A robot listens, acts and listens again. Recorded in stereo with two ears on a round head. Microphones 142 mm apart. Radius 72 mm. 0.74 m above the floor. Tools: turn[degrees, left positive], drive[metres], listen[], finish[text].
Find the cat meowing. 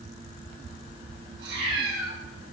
Thought: The cat meowing: about 70° right or 110° right.
Action: turn[-70]
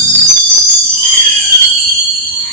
Action: listen[]
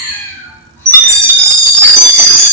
Thought: So it is at 15° left.
Action: turn[15]
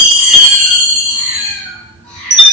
Thought: The cat meowing is now 10° left.
Action: turn[10]
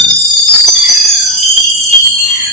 Action: listen[]
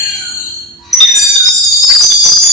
Action: listen[]
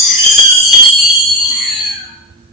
Action: finish[Facing where the cat meowing came from. I can't hear it now.]